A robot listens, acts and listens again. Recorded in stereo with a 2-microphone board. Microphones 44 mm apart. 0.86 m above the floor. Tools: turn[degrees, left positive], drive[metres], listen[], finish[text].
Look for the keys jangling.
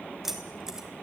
Action: turn[-30]
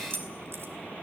Thought: So it is at 125° right.
Action: turn[-125]
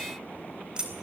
Thought: The keys jangling is now 20° right.
Action: turn[-20]
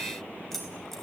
Action: finish[Facing the keys jangling, 2 to 4 m away.]